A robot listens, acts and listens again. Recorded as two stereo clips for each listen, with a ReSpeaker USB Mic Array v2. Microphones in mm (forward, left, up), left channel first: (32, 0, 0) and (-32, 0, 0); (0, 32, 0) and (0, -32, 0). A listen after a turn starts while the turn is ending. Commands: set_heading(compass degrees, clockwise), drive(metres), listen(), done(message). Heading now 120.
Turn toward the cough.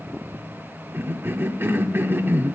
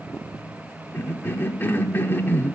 set_heading(340)
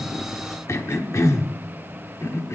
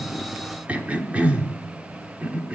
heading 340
set_heading(5)
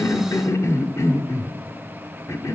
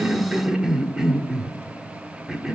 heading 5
set_heading(15)
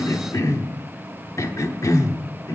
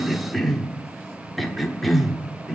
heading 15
done("Found it: a cough, straight ahead, 1 to 2 m away.")